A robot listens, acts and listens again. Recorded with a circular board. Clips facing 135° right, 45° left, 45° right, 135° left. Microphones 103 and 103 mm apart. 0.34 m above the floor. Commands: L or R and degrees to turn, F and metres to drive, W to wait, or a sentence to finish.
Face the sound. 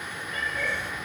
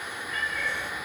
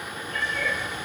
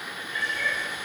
R75
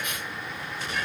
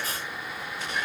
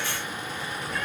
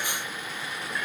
W
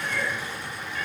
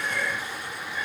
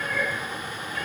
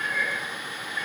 R30
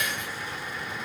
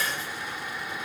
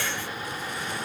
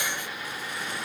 W
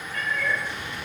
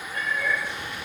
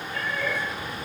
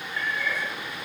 R20
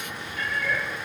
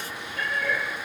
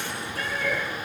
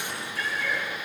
Facing the cat meowing, over 4 m away.